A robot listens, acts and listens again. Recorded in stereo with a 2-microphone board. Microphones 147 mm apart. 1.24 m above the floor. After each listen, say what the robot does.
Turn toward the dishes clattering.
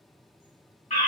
Keep listening.
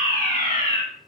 Keep listening.
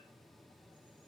I can't make out dishes clattering, only a fire alarm.